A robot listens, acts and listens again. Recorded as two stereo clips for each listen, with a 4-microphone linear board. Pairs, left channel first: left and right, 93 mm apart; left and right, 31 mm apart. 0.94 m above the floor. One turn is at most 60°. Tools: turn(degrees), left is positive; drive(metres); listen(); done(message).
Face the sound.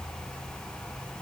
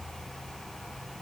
listen()
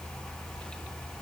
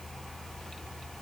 listen()
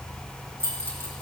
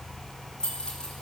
turn(degrees=25)
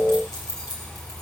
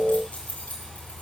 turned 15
turn(degrees=60)
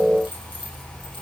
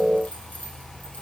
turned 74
turn(degrees=60)
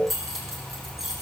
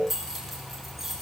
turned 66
done("Found it: keys jangling, straight ahead, over 4 m away.")